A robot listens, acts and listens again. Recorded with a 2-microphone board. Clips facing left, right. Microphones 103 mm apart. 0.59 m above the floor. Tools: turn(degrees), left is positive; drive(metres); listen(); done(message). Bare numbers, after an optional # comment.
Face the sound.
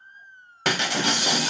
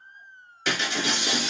# The breaking glass: about 60° left or 120° left.
turn(60)
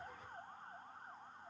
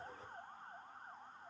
listen()
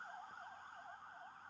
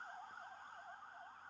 done("I heard breaking glass, but can't make it out now. It was about straight ahead or 60° left.")